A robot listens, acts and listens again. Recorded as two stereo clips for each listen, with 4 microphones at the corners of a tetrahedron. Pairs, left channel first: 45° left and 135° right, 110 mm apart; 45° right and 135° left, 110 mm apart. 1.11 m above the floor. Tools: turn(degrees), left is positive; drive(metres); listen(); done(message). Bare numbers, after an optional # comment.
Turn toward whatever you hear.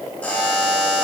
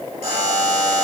# The buzzer: 120° left.
turn(120)
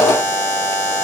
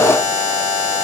# The buzzer is now 15° right.
turn(-15)
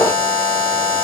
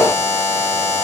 done("Facing the buzzer.")